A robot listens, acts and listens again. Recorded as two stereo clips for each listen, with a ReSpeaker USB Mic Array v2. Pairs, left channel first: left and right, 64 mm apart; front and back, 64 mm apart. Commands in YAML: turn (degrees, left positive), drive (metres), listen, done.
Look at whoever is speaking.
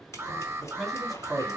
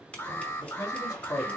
done: "Facing the man speaking."